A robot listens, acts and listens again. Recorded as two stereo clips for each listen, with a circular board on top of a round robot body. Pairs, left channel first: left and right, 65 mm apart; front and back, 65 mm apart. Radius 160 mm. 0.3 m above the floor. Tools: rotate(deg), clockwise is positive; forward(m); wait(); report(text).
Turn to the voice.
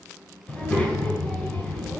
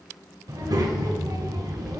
rotate(-165)
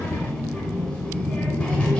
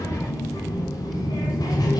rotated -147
rotate(-20)
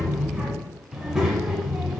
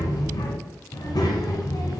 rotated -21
report("Found it: a child speaking, straight ahead.")